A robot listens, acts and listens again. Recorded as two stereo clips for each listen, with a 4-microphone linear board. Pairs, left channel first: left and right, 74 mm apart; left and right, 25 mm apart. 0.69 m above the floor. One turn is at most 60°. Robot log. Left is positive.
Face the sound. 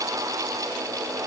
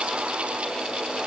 cmd idle
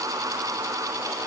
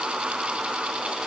cmd idle
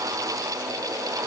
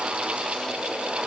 end: I can't make out anything to turn to.